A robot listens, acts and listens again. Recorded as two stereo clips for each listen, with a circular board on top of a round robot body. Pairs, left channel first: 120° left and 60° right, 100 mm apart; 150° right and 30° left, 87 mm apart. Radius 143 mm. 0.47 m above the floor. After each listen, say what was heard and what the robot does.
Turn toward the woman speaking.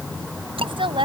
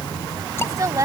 The woman speaking: 20° right. Turn 20° right.
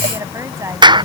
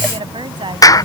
Found it: a woman speaking, straight ahead.